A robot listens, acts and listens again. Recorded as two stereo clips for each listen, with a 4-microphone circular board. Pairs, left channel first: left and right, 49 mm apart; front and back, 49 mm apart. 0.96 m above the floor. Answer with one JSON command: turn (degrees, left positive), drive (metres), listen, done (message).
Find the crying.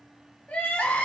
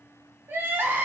{"turn": 145}
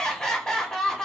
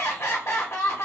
{"turn": 15}
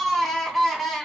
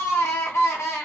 {"done": "Facing the crying."}